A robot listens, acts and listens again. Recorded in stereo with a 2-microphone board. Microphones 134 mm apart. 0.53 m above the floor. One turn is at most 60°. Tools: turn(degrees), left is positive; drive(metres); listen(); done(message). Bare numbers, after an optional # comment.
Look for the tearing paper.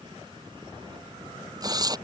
# The tearing paper: about 30° right or 150° right.
turn(-30)
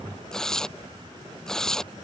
done("Found it: tearing paper, straight ahead.")